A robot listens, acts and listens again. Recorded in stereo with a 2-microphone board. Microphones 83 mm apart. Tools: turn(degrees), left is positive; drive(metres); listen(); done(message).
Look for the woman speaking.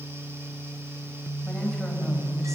listen()
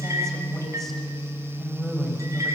turn(degrees=30)
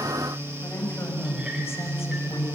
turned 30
turn(degrees=145)
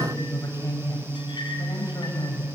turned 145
turn(degrees=50)
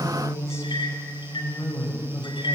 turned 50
turn(degrees=35)
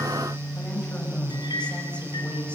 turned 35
turn(degrees=15)
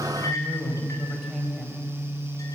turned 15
done("Facing the woman speaking.")